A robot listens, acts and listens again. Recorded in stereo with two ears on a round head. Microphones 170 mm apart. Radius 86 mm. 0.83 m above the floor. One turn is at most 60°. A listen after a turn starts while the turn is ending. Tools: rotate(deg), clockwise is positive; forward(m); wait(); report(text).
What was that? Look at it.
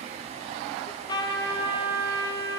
rotate(-25)
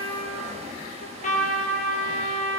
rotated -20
rotate(-60)
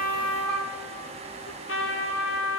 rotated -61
rotate(-60)
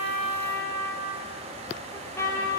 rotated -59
rotate(-15)
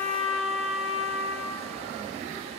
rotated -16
report("Facing the trumpet.")